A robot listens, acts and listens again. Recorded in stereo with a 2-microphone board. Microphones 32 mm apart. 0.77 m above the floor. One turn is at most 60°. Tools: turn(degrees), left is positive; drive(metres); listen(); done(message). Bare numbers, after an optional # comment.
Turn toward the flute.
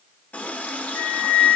# The flute: about 70° left or 110° left.
turn(60)
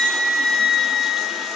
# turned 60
# So it is at 30° left.
turn(30)
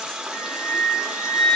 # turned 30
# The flute is now 10° left.
turn(10)
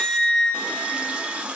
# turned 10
done("Facing the flute, 2 to 4 m away.")